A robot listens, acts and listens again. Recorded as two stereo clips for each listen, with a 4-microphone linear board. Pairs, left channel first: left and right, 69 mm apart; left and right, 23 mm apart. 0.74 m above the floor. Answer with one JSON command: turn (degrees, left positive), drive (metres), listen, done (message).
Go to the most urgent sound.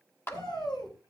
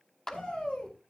{"turn": 90}
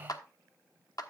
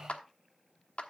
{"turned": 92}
{"listen": true}
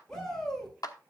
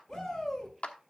{"turn": 10}
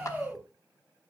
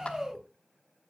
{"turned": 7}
{"drive": 1.0}
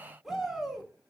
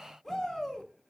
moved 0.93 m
{"drive": 1.0}
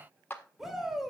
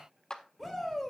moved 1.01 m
{"drive": 1.0}
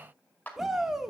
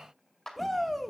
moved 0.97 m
{"drive": 1.0}
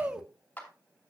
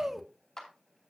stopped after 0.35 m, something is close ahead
{"turn": -10}
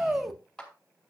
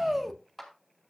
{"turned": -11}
{"done": "I am next to the shout."}